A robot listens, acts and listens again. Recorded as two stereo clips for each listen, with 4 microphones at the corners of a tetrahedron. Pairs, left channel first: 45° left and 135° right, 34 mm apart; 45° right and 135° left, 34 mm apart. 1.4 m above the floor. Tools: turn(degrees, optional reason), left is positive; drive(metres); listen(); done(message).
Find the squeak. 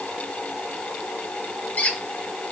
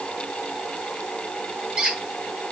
turn(degrees=70, reason="The squeak: 70° left.")
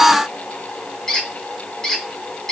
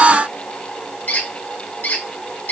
turn(degrees=-25, reason="The squeak is now 25° right.")
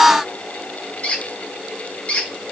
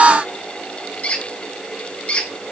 done("Facing the squeak.")